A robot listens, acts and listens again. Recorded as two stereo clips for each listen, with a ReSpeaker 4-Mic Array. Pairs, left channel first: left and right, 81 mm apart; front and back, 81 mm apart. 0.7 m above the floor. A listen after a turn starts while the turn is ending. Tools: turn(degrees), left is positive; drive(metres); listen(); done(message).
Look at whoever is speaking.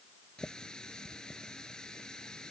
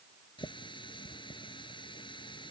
listen()
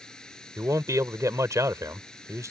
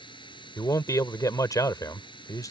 turn(degrees=-40)
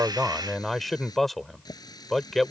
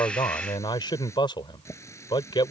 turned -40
done("Found it: a man speaking, straight ahead.")